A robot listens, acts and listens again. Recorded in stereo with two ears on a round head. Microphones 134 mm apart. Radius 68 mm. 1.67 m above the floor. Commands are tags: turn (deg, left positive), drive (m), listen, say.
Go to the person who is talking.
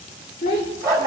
<turn deg="45"/>
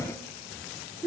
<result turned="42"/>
<drive m="1.0"/>
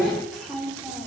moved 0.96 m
<drive m="1.0"/>
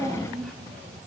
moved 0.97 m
<drive m="1.0"/>
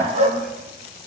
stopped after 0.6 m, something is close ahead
<listen/>
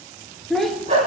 <say>I am next to the child speaking.</say>